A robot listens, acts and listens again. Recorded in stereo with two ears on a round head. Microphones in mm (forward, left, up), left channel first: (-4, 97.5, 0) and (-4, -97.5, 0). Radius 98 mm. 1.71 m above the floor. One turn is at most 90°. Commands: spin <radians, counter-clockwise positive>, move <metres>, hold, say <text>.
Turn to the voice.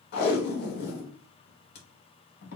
hold
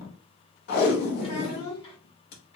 spin 0.44
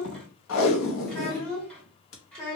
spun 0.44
say Found it: a child speaking, straight ahead.